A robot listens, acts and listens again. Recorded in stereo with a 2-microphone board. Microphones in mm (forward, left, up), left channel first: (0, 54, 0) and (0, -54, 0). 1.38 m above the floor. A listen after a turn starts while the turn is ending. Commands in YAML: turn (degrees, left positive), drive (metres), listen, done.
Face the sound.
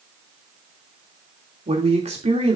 turn: -90
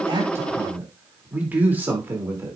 turn: -25
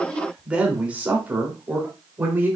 turn: -20
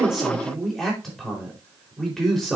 done: "Facing the man speaking, 2 to 4 m away."